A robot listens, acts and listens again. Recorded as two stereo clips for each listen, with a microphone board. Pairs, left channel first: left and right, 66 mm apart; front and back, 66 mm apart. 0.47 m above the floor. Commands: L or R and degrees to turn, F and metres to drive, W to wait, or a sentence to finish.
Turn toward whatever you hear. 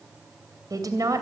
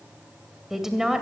R100
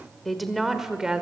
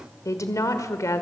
R15
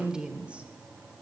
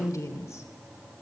R20
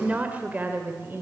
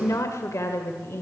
R40
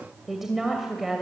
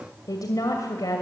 Found it: a woman speaking, straight ahead.